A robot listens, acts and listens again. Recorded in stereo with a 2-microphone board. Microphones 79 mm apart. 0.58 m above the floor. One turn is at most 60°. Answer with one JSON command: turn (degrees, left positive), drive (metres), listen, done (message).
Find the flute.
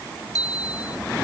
{"listen": true}
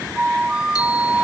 {"turn": -30}
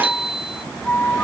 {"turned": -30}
{"turn": 20}
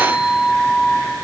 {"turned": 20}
{"done": "Found it: a flute, straight ahead."}